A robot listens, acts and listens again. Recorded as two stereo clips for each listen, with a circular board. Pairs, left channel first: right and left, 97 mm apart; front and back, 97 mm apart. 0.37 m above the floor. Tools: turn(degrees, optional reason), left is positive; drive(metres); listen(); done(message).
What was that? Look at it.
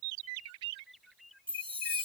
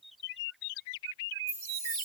turn(degrees=65, reason="The chime: 65° left.")
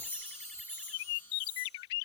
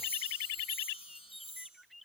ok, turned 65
turn(degrees=-15, reason="The chime is now 15° right.")
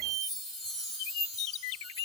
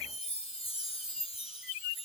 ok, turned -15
done("Facing the chime.")